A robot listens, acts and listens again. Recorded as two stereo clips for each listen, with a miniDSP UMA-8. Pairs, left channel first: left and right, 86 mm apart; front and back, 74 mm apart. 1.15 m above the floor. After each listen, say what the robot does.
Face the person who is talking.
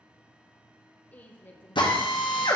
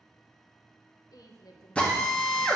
Turn 25° left.
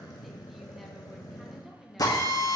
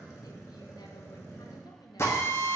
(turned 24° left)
Facing the woman speaking, under 1 m away.